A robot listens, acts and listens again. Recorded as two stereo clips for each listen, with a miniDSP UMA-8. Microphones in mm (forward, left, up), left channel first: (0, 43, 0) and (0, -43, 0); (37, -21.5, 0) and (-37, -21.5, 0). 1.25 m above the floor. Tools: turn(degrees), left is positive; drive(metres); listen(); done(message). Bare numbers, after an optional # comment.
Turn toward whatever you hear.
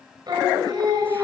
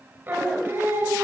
# The singing: 125° right.
turn(-125)
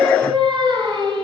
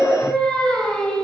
# The singing is now 80° right.
turn(-80)
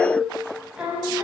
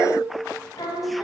# The singing is now 15° right.
turn(-15)
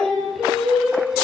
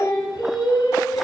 done("Facing the singing.")